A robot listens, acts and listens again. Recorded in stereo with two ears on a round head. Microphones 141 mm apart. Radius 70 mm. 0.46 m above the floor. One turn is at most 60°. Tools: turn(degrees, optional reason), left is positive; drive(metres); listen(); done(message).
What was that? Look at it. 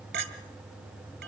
turn(degrees=-60, reason="The clink: about 70° right or 110° right.")
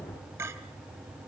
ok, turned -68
turn(degrees=-20, reason="So it is at 20° right.")
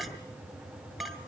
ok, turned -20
done("Facing the clink, 1 to 2 m away.")